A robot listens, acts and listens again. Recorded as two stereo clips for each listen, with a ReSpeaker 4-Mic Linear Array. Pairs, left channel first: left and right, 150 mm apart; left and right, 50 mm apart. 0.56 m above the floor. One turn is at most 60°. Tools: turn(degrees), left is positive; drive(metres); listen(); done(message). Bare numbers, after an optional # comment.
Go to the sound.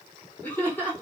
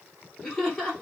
turn(30)
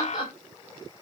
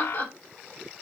# So it is at 135° left.
turn(60)
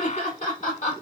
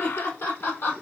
# The laughter is now 100° left.
turn(60)
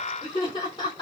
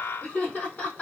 # The laughter is now 40° left.
turn(40)
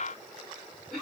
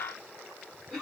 drive(1.0)
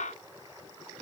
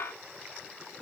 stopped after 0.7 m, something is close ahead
done("I am next to the laughter.")